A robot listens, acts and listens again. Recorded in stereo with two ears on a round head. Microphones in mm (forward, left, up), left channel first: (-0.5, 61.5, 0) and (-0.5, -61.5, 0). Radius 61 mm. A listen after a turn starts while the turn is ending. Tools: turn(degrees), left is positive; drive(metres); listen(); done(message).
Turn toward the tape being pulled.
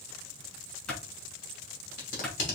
turn(degrees=60)
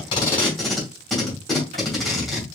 done("Facing the tape being pulled, 2 to 4 m away.")